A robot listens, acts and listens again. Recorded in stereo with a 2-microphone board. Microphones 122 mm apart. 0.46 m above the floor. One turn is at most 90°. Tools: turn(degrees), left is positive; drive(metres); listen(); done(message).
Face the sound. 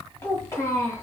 turn(degrees=25)
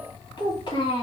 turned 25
turn(degrees=90)
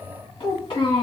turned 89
turn(degrees=50)
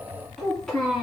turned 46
done("Facing the child speaking, 2 to 4 m away.")